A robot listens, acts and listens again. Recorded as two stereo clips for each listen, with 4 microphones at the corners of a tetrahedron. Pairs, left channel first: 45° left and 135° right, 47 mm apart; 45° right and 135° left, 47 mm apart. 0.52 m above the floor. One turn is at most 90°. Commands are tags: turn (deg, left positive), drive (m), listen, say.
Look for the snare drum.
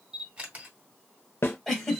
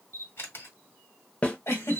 <turn deg="15"/>
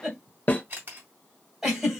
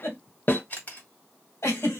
<say>Found it: a snare drum, straight ahead, under 1 m away.</say>